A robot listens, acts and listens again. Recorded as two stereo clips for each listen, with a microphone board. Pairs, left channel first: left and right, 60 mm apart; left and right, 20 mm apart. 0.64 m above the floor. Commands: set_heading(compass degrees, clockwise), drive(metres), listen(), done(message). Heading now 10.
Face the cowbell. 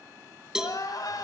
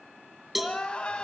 set_heading(40)
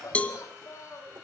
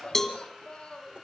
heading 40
set_heading(20)
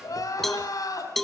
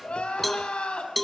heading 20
done("Facing the cowbell, 1 to 2 m away.")